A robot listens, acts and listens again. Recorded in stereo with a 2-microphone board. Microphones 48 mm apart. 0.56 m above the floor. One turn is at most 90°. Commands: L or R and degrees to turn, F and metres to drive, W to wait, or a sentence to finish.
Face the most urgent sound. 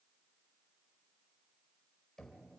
W
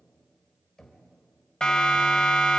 L15
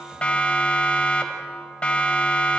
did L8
L25
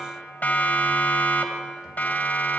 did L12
L90
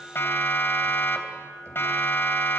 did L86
L55
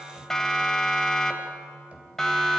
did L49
L10
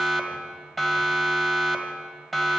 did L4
Found it: a siren, straight ahead, 2 to 4 m away.